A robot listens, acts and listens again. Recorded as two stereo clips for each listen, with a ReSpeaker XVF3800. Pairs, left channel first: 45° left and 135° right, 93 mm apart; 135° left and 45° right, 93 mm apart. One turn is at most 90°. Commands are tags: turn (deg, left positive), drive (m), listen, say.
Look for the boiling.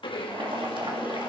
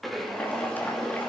<turn deg="-90"/>
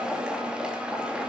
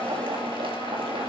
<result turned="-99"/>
<turn deg="-55"/>
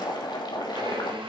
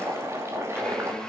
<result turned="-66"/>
<turn deg="10"/>
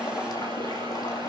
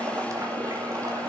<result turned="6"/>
<say>Found it: boiling, straight ahead.</say>